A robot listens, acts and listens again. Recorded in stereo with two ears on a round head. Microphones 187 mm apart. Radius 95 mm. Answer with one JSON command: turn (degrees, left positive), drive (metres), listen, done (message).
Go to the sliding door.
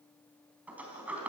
{"turn": -30}
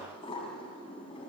{"turn": 25}
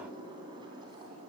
{"turn": -20}
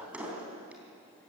{"drive": 1.0}
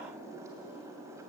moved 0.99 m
{"turn": -15}
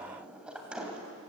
{"drive": 1.0}
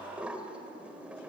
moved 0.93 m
{"drive": 1.0}
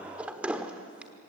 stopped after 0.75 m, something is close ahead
{"done": "Arrived at the sliding door, straight ahead."}